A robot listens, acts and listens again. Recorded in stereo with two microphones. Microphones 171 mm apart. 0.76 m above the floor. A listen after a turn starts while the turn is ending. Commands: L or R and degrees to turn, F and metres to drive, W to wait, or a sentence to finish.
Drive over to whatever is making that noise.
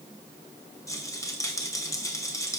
L20
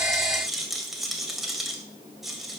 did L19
F1.0
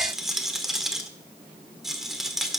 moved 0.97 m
F1.0
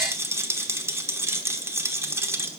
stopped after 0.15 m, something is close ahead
R15
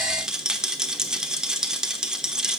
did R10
Arrived at the rattle, straight ahead.